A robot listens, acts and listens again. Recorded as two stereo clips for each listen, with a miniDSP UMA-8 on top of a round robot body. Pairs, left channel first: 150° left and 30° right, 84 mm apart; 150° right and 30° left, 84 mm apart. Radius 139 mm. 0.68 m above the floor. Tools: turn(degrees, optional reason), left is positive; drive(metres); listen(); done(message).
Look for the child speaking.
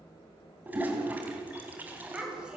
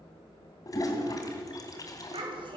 turn(degrees=50, reason="The child speaking: 50° left.")
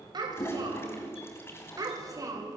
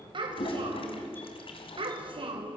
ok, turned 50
turn(degrees=25, reason="The child speaking is now 25° left.")
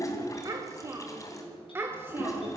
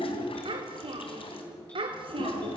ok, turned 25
turn(degrees=35, reason="The child speaking is now 35° left.")
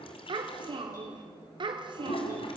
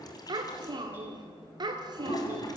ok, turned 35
done("Found it: a child speaking, straight ahead, 1 to 2 m away.")